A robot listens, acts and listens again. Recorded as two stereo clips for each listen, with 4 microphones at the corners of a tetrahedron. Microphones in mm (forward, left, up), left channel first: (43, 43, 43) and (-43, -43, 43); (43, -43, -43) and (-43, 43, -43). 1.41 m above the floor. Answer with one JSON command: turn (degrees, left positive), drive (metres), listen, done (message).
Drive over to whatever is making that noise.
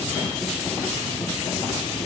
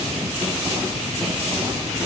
{"listen": true}
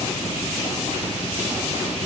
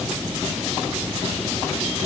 {"listen": true}
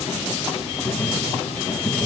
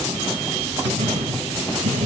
{"turn": 130}
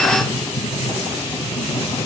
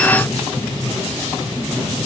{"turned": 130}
{"drive": 1.0}
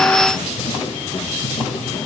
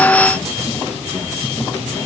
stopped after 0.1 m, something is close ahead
{"listen": true}
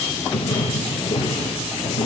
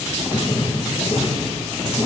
{"done": "Something is in my way. I am facing the writing but have not reached it."}